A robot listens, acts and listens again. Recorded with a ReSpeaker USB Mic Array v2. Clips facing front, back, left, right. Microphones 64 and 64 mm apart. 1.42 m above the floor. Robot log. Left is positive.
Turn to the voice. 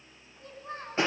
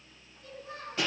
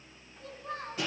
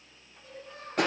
note: The child speaking: 55° left.
cmd yaw +55
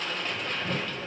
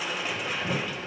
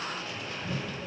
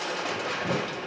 cmd idle
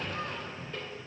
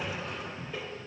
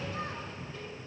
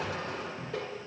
cmd idle
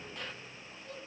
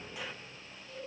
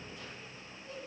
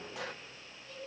note: The child speaking is now 20° left.
cmd yaw +20
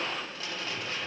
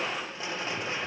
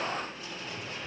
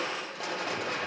cmd idle
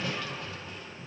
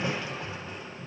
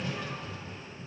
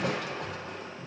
cmd idle
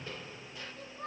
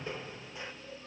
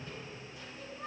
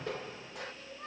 end: Facing the child speaking.